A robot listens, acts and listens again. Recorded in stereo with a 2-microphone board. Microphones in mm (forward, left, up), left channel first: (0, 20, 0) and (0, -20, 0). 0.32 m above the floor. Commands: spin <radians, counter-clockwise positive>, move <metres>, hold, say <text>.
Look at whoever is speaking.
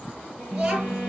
spin -0.44
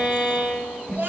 spin -2.18
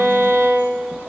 hold
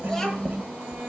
spin 0.17
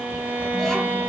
hold
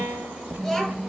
say Facing the child speaking, 2 to 4 m away.